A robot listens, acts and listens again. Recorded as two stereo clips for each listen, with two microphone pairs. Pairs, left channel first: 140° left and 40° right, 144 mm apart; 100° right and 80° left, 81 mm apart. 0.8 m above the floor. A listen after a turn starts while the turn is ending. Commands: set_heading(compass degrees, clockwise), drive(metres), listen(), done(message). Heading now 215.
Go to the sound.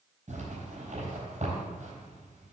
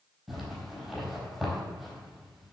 set_heading(225)
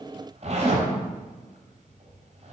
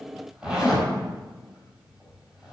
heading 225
drive(1.0)
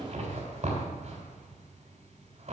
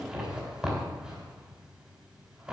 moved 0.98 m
drive(1.0)
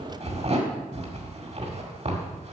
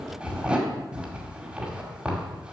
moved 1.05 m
drive(1.0)
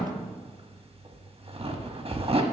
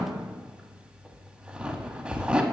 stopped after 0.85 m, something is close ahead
done("Arrived at the zipper, straight ahead.")